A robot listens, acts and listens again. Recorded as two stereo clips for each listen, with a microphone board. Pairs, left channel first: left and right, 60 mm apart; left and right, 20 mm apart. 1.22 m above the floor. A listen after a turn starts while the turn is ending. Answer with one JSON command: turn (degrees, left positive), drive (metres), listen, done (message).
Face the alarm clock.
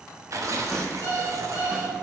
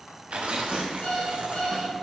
{"turn": 55}
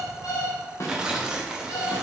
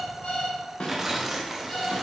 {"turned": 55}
{"turn": 70}
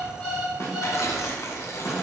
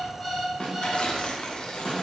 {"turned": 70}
{"done": "Facing the alarm clock."}